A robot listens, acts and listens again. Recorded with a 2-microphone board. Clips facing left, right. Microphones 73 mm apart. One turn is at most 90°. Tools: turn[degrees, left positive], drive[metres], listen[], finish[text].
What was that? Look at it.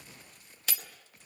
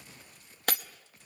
Thought: The breaking glass: about 55° right or 125° right.
Action: turn[-55]
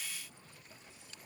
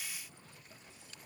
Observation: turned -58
Action: listen[]
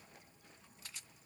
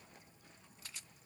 Action: finish[I heard breaking glass, but can't make it out now. It was about 5° left or 70° right.]